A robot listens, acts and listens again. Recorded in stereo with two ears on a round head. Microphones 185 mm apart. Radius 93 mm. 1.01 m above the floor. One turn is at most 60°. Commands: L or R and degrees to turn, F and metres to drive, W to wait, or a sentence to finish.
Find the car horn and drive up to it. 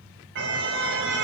R60
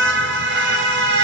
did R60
R55
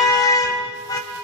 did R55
L15
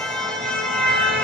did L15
F1.0
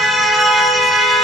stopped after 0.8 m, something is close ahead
Something is in my way. I am facing the car horn but have not reached it.